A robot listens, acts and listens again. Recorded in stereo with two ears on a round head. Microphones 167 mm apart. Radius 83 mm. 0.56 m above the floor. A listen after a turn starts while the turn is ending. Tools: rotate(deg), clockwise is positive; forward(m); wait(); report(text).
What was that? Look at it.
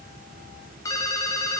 rotate(-15)
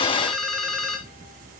report("Facing the ringtone.")